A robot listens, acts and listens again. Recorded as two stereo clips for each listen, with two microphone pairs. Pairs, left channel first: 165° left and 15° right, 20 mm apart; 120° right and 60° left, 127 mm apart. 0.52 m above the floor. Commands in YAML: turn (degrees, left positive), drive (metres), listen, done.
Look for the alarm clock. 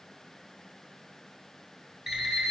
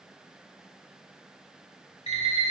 turn: -95
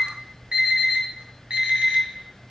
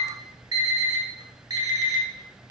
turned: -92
done: "Found it: an alarm clock, straight ahead, 2 to 4 m away."